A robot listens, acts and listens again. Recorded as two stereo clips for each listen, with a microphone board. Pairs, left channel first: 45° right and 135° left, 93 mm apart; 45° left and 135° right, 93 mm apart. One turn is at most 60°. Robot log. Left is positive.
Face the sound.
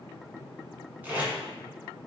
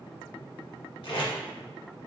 note: The tape being pulled: 65° left.
cmd yaw +60
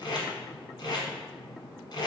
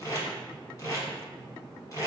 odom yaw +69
end: Facing the tape being pulled.